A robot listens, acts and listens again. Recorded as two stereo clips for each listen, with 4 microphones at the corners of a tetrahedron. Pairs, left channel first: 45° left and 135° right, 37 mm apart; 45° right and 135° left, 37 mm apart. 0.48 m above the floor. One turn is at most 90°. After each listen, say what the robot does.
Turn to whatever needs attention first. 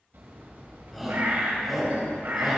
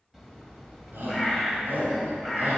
Turn 90° left.
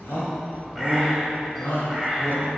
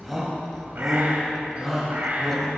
Turn 50° left.
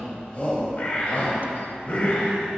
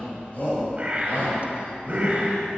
Facing the shout, 2 to 4 m away.